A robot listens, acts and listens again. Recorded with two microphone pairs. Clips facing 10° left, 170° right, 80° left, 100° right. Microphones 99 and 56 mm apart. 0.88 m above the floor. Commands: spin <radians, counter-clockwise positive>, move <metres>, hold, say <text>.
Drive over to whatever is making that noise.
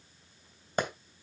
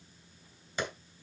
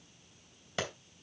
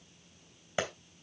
spin -0.52
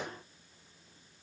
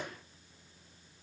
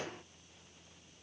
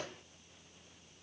hold
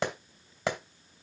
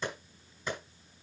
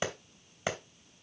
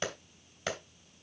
move 1.0
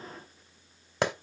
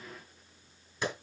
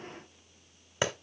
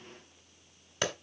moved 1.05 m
spin 0.17
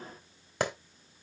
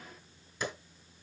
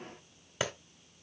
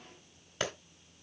move 1.0
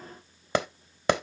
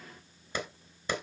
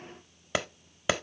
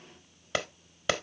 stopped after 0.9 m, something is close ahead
say Arrived at the clap, straight ahead.